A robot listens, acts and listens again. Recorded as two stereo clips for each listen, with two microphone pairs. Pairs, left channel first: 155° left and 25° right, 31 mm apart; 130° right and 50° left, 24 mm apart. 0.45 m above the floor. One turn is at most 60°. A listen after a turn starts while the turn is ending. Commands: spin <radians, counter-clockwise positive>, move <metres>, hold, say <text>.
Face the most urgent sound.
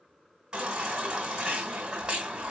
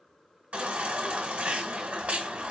spin 0.61
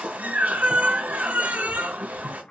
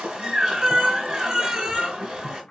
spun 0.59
say Found it: a baby crying, straight ahead, 2 to 4 m away.